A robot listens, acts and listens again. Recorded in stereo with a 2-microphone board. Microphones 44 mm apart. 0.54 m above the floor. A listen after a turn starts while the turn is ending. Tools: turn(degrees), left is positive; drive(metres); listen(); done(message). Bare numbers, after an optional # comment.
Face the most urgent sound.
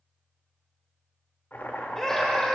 turn(30)
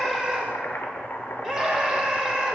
# So it is at 15° right.
turn(-15)
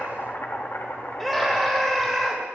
done("Facing the scream, 1 to 2 m away.")